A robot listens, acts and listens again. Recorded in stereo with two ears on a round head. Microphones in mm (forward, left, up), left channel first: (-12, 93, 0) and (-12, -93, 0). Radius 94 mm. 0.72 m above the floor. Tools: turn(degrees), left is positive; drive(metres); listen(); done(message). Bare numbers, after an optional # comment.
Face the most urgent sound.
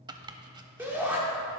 turn(-30)
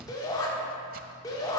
# So it is at 20° left.
turn(20)
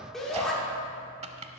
done("Facing the shout.")